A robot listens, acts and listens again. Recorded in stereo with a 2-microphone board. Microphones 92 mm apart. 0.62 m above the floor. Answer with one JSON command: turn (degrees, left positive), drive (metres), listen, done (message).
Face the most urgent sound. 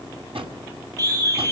{"turn": -45}
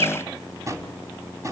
{"listen": true}
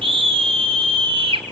{"turn": -90}
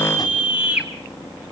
{"turn": -15}
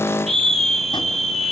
{"done": "Found it: a scream, straight ahead."}